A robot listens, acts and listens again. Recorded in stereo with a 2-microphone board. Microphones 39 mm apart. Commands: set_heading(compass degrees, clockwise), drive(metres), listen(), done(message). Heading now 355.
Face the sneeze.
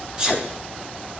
set_heading(20)
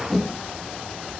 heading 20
listen()
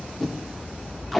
done("I heard a sneeze, but can't make it out now. It was about straight ahead or 130° right.")